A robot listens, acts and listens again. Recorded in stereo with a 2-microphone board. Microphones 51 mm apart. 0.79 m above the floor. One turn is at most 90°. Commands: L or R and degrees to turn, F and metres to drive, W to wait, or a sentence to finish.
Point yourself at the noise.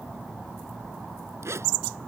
R65
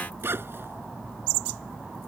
R50
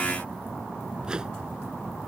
W
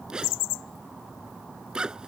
R15
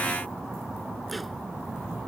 W
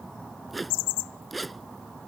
Found it: a zipper, straight ahead.